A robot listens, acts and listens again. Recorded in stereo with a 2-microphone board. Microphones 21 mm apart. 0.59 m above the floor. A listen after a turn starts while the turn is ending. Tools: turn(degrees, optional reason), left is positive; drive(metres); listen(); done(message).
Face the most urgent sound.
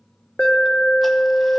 turn(degrees=45, reason="The alarm: about 45° left or 135° left.")
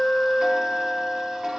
turn(degrees=10, reason="So it is at 10° left.")
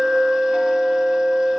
done("Facing the alarm.")